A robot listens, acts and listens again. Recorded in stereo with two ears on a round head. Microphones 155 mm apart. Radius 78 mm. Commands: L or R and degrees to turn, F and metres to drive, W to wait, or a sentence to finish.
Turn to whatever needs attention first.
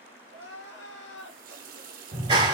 L90
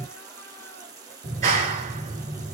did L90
W
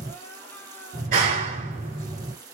W
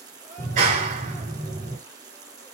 I heard crying from this way, but can't make it out now.